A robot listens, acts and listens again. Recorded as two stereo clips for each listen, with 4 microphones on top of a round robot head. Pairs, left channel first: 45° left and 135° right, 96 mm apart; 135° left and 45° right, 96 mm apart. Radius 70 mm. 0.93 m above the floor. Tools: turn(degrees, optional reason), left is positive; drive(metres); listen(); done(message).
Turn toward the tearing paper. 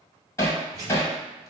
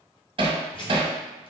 turn(degrees=175, reason="The tearing paper: 175° left.")
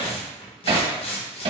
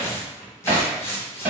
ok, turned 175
turn(degrees=70, reason="The tearing paper is now 70° left.")
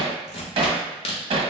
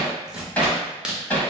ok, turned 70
turn(degrees=35, reason="The tearing paper is now 35° left.")
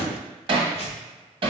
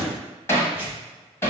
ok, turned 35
turn(degrees=25, reason="The tearing paper is now 25° left.")
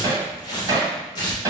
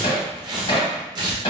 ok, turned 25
done("Facing the tearing paper, 1 to 2 m away.")